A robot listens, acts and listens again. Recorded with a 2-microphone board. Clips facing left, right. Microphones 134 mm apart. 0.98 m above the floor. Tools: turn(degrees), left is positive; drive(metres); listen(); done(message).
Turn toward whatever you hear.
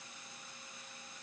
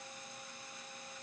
listen()
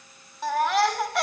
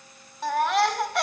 turn(degrees=30)
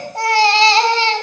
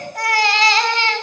turn(degrees=150)
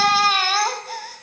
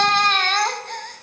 done("Found it: a baby crying, straight ahead.")